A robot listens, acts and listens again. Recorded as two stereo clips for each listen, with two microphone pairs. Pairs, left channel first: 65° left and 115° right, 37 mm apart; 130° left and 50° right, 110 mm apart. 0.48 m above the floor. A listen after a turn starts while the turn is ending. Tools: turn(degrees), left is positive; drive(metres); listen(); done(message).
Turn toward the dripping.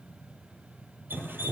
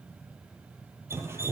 turn(degrees=-120)
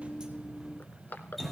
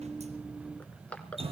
turn(degrees=-25)
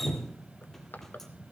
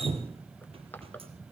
turn(degrees=-20)
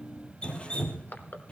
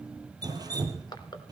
done("Facing the dripping.")